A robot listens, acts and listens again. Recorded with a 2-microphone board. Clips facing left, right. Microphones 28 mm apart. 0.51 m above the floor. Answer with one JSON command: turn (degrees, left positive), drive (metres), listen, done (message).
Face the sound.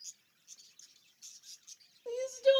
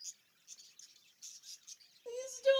{"turn": 30}
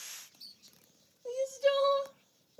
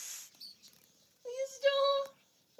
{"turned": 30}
{"turn": -15}
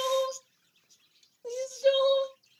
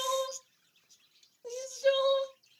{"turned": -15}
{"done": "Found it: crying, straight ahead, under 1 m away."}